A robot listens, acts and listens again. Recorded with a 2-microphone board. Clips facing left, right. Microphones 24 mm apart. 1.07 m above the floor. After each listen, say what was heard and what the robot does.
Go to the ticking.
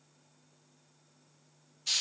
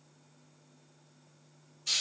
Keep listening.
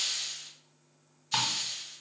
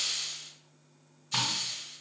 The ticking: about 55° left or 125° left. Turn 55° left.
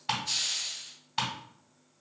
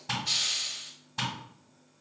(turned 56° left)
So it is at 65° left. Turn 65° left.
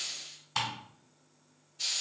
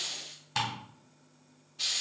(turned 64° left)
Drive 1.0 m forward.
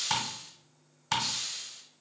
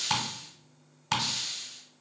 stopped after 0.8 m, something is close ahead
I am next to the ticking.